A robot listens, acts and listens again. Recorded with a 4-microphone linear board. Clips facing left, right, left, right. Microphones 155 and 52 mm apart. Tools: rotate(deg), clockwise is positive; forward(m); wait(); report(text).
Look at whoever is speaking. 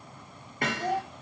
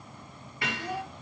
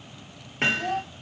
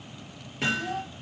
rotate(-70)
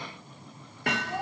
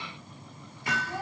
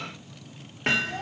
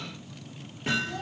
rotate(-20)
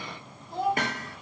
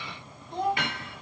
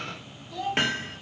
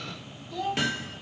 report("Found it: a child speaking, straight ahead.")